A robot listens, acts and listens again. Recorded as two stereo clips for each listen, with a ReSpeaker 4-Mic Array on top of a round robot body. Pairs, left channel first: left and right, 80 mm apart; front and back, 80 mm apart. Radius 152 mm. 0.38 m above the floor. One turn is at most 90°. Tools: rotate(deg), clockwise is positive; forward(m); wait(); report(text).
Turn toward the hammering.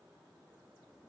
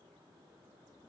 wait()
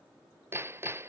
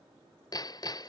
rotate(35)
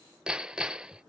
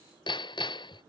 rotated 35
rotate(10)
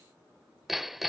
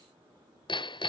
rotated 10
report("Facing the hammering.")